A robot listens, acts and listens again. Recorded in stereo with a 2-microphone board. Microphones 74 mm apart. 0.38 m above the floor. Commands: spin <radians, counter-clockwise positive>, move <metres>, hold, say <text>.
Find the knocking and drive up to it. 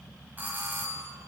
hold
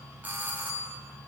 hold
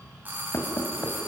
spin 0.79
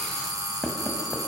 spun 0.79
move 1.0
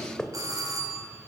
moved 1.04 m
spin 0.26
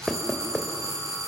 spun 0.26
move 1.0
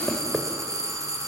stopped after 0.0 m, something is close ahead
say I am next to the knocking.